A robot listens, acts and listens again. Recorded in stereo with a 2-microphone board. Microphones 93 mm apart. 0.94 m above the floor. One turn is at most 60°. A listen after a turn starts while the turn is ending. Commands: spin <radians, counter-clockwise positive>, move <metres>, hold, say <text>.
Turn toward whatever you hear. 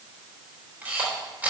spin -0.35
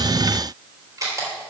spin -1.05
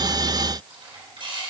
spin -1.05
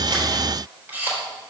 spin -0.35
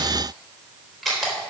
say Facing the camera shutter.